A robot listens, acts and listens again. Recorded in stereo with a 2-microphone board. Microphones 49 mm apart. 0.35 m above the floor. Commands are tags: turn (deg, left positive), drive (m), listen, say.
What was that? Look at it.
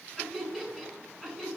<turn deg="30"/>
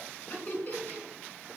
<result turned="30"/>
<turn deg="140"/>
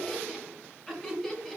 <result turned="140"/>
<say>Found it: laughter, straight ahead.</say>